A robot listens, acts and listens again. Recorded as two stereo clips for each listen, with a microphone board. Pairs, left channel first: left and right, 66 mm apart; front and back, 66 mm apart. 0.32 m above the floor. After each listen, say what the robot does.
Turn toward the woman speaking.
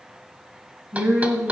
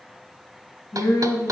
Turn 20° right.
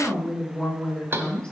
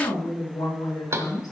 Turn 10° left.
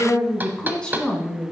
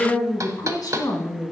Turn 20° left.
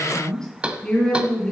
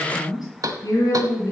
Turn 15° left.
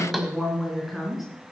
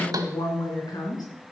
Facing the woman speaking.